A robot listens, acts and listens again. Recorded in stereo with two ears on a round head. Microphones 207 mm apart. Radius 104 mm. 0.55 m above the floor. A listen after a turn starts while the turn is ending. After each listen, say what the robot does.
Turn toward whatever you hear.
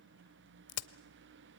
Turn 70° left.
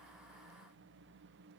Keep listening.
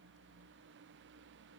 I heard a crack, but can't make it out now. It was about straight ahead or 40° left.